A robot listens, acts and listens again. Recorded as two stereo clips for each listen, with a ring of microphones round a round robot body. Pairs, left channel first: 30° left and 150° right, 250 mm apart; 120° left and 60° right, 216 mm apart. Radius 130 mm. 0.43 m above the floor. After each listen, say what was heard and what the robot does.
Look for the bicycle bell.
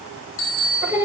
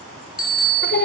The bicycle bell: 70° left. Turn 70° left.
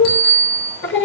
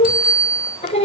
Found it: a bicycle bell, straight ahead.